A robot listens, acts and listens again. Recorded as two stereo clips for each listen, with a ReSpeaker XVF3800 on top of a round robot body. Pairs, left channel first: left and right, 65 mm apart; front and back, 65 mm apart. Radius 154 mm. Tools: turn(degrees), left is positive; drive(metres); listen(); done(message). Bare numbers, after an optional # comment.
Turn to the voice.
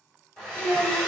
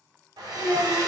# The child speaking: 135° left.
turn(135)
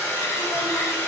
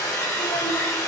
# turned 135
listen()
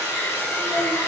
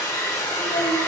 done("Facing the child speaking.")